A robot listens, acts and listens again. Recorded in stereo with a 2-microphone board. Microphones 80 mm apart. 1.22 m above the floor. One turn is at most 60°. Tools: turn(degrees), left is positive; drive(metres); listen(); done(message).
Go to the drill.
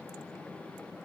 listen()
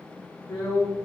turn(degrees=60)
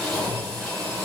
drive(metres=1.0)
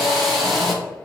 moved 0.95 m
drive(metres=1.0)
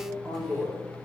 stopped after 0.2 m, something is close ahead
done("I am next to the drill.")